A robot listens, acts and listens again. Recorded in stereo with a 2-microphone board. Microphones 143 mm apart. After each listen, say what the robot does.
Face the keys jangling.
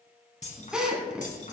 Turn 60° left.
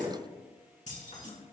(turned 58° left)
Turn 50° left.
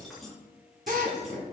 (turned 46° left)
Found it: keys jangling, straight ahead.